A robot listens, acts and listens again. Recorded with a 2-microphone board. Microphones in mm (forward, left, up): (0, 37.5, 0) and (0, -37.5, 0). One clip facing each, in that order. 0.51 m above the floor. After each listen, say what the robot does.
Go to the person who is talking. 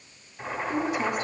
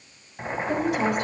Turn 70° right.
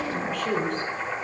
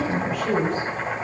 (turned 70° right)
Drive 1.0 m forward.
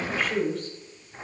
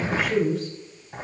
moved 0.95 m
Drive 1.0 m forward.
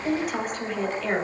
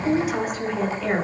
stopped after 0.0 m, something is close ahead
Something is in my way. I am facing the woman speaking but have not reached it.